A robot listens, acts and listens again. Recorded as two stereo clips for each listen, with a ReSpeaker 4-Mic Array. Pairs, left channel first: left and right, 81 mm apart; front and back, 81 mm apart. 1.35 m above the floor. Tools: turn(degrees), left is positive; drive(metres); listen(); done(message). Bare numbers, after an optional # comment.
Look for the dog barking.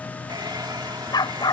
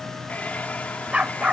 # The dog barking: 105° left.
turn(105)
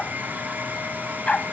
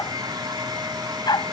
# The dog barking is now 15° left.
turn(15)
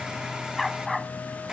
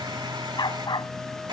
done("Facing the dog barking.")